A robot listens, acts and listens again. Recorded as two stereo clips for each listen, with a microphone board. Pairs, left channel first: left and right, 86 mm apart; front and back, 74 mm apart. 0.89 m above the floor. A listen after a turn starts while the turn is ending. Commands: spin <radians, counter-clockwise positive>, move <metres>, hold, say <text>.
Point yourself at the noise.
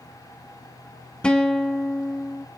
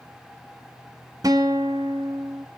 spin 2.88
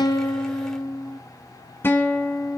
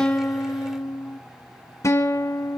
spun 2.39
spin 0.52
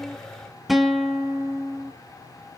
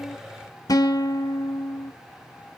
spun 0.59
say Facing the guitar.